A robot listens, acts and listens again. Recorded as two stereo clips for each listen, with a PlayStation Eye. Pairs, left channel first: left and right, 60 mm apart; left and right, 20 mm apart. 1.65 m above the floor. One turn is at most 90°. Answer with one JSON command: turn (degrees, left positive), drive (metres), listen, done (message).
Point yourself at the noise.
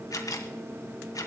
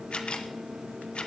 {"turn": 75}
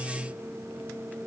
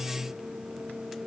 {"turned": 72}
{"listen": true}
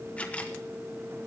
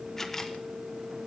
{"turn": 25}
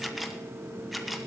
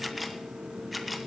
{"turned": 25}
{"done": "Found it: a camera shutter, straight ahead, 1 to 2 m away."}